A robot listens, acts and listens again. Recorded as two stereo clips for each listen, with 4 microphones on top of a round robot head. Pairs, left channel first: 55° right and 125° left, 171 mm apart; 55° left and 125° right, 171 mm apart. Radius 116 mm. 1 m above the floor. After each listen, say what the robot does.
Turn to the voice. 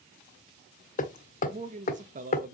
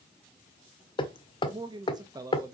Turn 160° left.
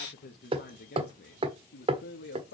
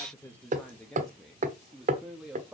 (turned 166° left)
Turn 45° right.
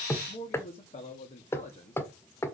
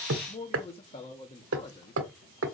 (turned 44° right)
Found it: a man speaking, straight ahead.